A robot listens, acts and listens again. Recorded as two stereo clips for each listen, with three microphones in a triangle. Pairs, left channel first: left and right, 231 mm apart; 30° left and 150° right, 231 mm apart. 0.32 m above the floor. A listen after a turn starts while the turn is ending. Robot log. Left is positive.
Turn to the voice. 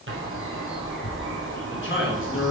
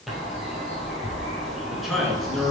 note: The man speaking: 120° left.
cmd yaw +120
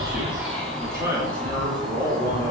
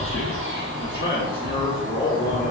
note: The man speaking is now 15° right.
cmd yaw -15
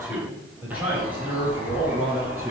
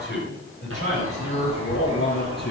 note: The man speaking is now 10° right.
cmd yaw -10
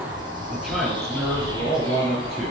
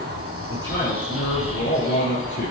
end: Facing the man speaking.